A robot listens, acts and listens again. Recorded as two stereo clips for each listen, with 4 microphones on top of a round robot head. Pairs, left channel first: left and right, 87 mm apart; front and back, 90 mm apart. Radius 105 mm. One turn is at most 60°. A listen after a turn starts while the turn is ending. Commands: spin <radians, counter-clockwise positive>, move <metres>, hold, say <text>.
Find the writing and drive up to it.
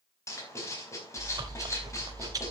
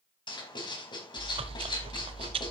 spin 0.61
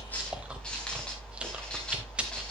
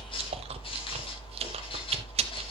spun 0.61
hold
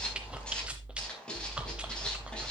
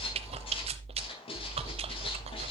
spin 0.17
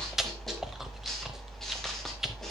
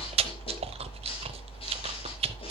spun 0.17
hold
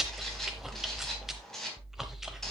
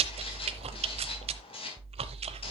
move 1.0
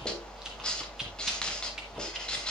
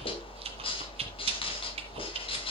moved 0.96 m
spin 0.17
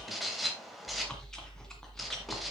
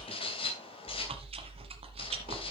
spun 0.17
move 1.0
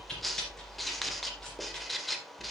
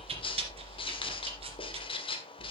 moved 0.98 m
move 1.0
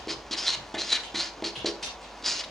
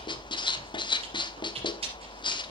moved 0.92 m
move 1.0
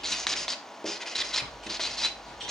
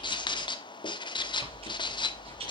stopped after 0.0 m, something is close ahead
say Arrived at the writing, straight ahead.